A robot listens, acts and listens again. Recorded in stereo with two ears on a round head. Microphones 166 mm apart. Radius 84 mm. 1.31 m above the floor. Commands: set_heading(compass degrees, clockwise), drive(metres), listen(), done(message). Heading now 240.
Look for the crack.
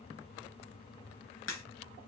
set_heading(165)
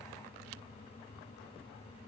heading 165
listen()
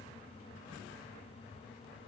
done("I heard a crack, but can't make it out now. It was about straight ahead or 30° left.")